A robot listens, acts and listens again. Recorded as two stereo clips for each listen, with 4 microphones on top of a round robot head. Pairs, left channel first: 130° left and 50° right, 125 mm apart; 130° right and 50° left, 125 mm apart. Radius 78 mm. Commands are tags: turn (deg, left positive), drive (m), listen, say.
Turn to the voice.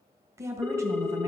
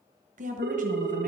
<turn deg="20"/>
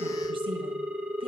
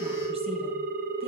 <listen/>
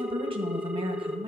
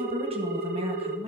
<say>Found it: a woman speaking, straight ahead.</say>